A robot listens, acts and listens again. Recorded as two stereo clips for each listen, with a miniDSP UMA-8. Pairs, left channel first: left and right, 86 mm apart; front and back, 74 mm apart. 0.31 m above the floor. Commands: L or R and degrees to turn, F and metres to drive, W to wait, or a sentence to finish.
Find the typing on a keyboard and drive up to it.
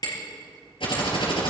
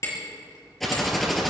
L90
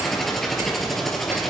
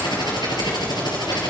F1.0
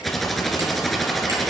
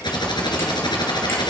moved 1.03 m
F1.0
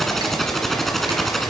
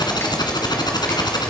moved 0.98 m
F1.0
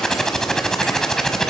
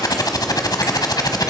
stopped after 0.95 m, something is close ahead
I am next to the typing on a keyboard.